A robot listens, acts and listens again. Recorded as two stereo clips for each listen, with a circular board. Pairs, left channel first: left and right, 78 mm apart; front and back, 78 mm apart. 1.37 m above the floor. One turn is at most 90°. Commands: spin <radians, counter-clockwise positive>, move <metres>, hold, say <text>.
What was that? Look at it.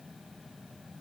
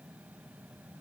hold
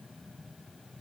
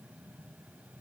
hold
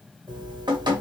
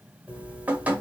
spin -1.57
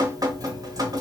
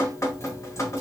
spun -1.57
spin -0.87
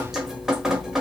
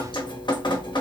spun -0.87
say Facing the dripping.